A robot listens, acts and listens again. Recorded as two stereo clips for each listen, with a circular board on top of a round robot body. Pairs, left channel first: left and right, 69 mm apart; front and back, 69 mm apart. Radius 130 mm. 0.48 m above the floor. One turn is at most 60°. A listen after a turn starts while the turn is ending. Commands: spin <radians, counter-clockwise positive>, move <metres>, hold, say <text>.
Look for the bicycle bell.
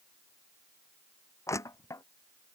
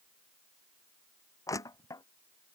hold
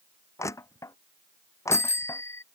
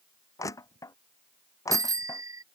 spin 1.05
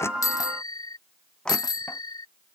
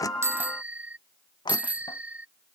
spin 1.05
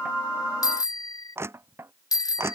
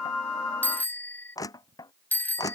spin 1.05
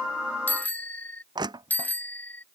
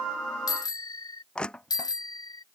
spin 0.44
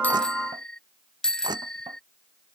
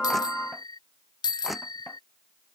spin 0.17
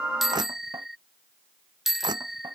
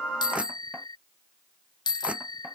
say Facing the bicycle bell.